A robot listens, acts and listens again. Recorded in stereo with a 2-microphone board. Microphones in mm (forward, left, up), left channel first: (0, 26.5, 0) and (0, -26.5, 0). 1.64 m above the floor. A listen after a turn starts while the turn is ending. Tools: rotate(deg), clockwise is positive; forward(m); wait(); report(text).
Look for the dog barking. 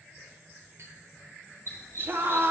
rotate(-55)
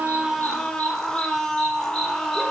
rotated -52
wait()
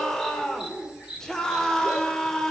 rotate(15)
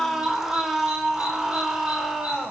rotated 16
wait()
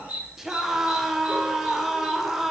rotate(30)
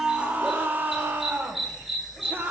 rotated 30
report("Facing the dog barking, 1 to 2 m away.")